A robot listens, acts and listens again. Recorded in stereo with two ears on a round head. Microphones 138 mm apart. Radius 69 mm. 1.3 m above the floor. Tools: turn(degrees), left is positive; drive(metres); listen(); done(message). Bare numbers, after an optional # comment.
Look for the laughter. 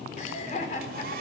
# The laughter: about 50° left or 130° left.
turn(50)
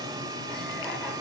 listen()
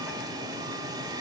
listen()
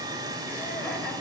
done("I heard laughter, but can't make it out now. It was about straight ahead or 80° left.")